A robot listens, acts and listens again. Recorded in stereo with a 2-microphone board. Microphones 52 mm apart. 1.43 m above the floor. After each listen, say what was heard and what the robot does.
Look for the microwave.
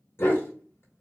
Keep listening.
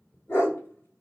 Keep listening.
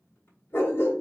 I can't make out a microwave to turn to.